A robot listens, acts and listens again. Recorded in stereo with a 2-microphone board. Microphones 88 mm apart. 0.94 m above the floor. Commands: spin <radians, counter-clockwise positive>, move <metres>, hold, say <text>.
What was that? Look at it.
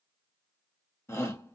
spin 0.61
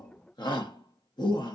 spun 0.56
spin 2.01
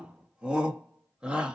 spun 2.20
spin -0.17
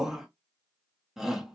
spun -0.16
say Found it: a shout, straight ahead.